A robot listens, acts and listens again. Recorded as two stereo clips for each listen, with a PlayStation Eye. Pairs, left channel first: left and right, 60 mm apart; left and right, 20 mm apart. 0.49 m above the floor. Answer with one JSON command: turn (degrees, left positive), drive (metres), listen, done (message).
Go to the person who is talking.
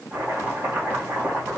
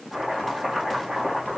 {"listen": true}
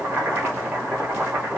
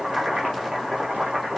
{"listen": true}
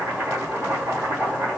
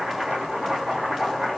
{"done": "I can't make out anyone speaking, only chopping."}